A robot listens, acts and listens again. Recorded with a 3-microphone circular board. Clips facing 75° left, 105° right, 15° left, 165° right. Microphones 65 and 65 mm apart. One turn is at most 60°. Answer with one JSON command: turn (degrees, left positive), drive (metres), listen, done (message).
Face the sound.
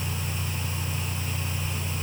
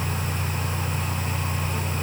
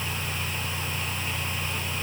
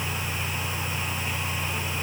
{"listen": true}
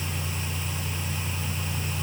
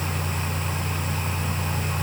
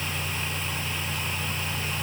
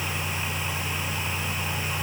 {"listen": true}
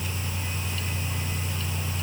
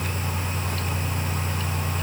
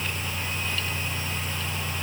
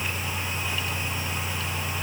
{"done": "I can't make out anything."}